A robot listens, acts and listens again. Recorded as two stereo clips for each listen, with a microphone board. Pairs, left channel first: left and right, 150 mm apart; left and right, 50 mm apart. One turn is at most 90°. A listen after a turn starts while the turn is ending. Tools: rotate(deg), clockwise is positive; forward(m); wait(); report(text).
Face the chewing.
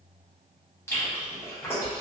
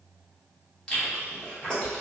rotate(-20)
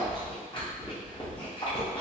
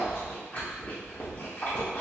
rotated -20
rotate(-90)
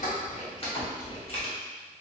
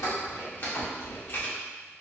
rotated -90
rotate(-45)
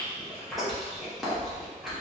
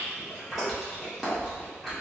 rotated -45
report("Found it: chewing, straight ahead, under 1 m away.")